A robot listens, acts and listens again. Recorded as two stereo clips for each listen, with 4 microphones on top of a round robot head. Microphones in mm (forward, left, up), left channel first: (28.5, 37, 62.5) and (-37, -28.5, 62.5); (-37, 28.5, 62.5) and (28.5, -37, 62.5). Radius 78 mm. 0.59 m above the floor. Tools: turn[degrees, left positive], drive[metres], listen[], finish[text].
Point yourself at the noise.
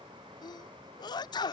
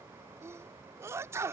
Thought: The sneeze: 10° left.
Action: turn[10]
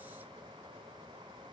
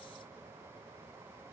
Action: finish[Facing where the sneeze came from. I can't hear it now.]